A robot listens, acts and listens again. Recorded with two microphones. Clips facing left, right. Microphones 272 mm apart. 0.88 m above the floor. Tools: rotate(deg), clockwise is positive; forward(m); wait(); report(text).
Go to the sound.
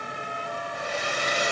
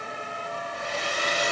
rotate(-50)
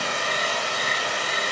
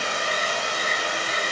forward(1.0)
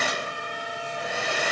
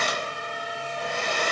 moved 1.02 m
forward(1.0)
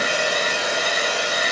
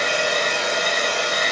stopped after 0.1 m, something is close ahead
rotate(-10)
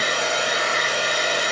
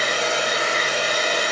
report("Arrived at the hair dryer, straight ahead.")